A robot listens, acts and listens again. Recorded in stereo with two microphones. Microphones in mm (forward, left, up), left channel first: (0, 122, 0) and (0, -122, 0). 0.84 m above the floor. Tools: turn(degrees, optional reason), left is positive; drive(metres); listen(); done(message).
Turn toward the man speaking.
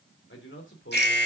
turn(degrees=50, reason="The man speaking: about 50° left or 130° left.")
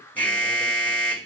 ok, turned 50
listen()
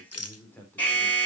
turn(degrees=10, reason="So it is at 10° left.")
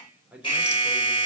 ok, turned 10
done("Facing the man speaking, 2 to 4 m away.")